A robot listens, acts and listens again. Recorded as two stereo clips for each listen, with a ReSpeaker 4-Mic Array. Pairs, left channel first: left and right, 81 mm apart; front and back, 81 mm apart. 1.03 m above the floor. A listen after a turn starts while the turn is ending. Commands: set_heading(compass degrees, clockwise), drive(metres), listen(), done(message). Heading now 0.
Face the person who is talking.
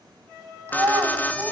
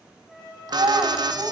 set_heading(150)
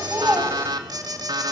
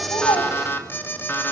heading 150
listen()
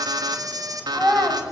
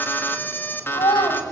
done("Found it: a child speaking, straight ahead.")